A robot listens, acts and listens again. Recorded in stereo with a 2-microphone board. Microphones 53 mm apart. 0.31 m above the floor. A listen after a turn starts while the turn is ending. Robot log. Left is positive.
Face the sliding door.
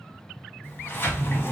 note: The sliding door: about 40° left or 140° left.
cmd yaw +40
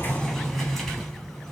end: Facing the sliding door, under 1 m away.